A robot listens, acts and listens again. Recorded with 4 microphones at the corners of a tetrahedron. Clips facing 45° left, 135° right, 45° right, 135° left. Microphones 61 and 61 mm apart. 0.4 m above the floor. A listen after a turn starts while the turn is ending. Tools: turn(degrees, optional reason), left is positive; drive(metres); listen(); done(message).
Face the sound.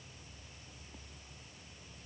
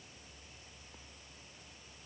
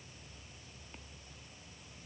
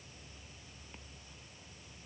listen()
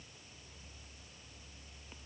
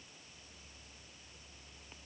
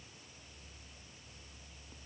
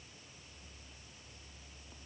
listen()
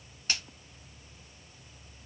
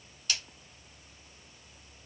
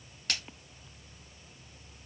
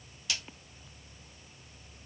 turn(degrees=-10, reason="The splash: 10° right.")
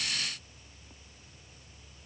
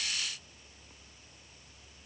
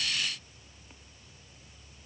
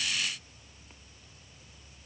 done("I heard a splash from this way, but can't make it out now.")